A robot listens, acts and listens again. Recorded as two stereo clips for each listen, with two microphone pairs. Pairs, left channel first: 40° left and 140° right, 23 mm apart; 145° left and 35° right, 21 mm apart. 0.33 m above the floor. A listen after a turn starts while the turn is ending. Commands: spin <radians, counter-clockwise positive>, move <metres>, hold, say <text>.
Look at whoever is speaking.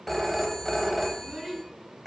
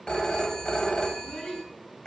spin 2.53
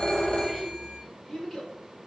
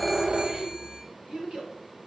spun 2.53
spin -0.35
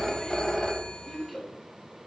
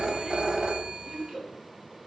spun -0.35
spin -0.35
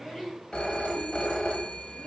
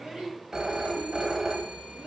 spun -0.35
spin -0.17
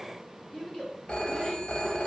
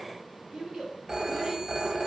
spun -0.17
say Facing the child speaking.